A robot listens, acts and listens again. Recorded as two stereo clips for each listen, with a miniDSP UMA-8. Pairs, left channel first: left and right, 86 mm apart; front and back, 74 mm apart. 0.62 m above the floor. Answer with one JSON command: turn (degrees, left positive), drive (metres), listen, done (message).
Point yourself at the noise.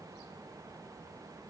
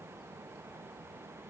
{"listen": true}
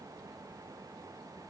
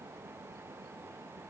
{"listen": true}
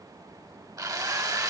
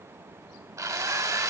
{"turn": -135}
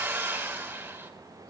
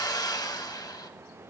{"turn": -25}
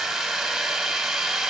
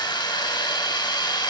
{"done": "Facing the drill."}